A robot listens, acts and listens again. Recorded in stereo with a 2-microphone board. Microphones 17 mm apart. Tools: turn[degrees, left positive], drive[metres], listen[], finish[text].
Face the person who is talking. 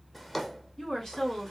Thought: The woman speaking: about 30° left or 150° left.
Action: turn[30]
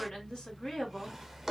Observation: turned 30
Thought: So it is at 120° left.
Action: turn[120]
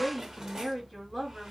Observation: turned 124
Action: finish[Found it: a woman speaking, straight ahead, 2 to 4 m away.]